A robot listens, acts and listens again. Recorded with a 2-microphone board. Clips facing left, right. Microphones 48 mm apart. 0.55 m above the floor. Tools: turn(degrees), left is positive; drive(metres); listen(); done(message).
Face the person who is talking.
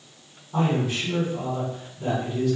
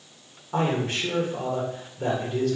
turn(degrees=-60)
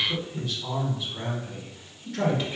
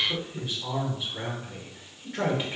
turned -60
turn(degrees=-25)
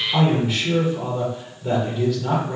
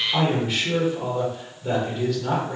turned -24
done("Found it: a man speaking, straight ahead.")